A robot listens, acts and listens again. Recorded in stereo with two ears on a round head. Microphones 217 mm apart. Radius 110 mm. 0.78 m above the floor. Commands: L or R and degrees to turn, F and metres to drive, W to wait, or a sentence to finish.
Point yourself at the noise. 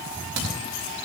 R60
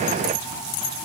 W
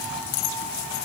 I heard a crack, but can't make it out now. It was about straight ahead or 60° right.